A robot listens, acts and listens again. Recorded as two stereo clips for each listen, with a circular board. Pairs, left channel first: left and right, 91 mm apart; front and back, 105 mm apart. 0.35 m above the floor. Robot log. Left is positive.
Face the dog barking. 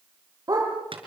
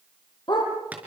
note: The dog barking: 40° right.
cmd yaw -40
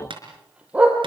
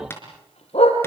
note: The dog barking is now 15° right.
cmd yaw -15
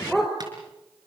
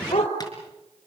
end: Facing the dog barking.